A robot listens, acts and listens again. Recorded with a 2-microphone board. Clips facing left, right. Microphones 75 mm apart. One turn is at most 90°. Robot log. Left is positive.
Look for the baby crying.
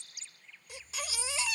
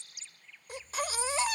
note: The baby crying: about 45° right or 135° right.
cmd yaw -45
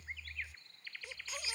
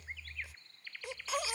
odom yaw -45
note: So it is at 95° right.
cmd yaw -90
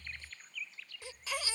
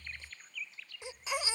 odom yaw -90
note: The baby crying is now 20° right.
cmd yaw -20
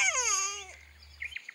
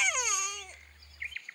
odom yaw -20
end: Facing the baby crying.